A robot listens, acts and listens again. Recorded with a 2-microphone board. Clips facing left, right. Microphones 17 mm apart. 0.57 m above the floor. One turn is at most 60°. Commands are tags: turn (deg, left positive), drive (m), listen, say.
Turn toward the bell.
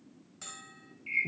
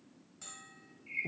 <turn deg="25"/>
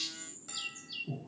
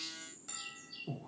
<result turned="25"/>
<say>Facing the bell.</say>